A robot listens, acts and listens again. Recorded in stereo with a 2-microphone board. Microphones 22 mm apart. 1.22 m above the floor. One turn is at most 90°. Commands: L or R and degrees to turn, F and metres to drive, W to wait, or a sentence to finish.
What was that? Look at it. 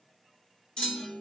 L45
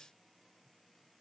W
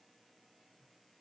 I heard a clunk, but can't make it out now. It was about straight ahead or 90° left.